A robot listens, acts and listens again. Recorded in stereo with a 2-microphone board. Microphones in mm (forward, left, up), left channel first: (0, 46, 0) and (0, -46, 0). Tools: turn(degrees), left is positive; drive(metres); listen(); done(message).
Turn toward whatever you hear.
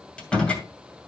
turn(degrees=30)
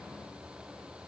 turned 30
listen()
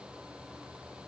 done("I heard a door slam, but can't make it out now. It was about 20° right or 140° left.")